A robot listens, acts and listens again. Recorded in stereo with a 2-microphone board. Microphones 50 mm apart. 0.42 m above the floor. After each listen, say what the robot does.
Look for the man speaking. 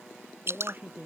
Turn 40° right.
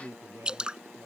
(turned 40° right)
Turn 100° right.
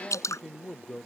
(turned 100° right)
Turn 10° left.
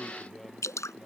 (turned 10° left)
Keep listening.
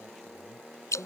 Keep listening.
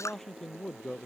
Turn 10° left.
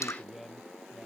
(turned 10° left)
Facing the man speaking.